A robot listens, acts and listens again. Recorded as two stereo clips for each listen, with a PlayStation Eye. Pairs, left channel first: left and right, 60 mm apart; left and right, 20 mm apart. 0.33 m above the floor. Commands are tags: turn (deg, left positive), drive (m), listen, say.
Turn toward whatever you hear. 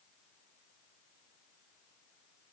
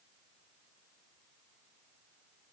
<listen/>
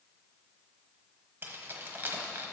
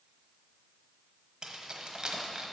<turn deg="-35"/>
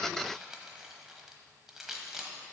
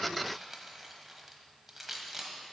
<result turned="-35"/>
<say>Found it: keys jangling, straight ahead, 1 to 2 m away.</say>